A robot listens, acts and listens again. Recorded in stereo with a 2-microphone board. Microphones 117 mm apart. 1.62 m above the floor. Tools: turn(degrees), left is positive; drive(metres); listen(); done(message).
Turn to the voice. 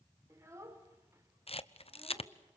turn(degrees=-25)
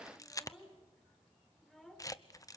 done("Facing the child speaking.")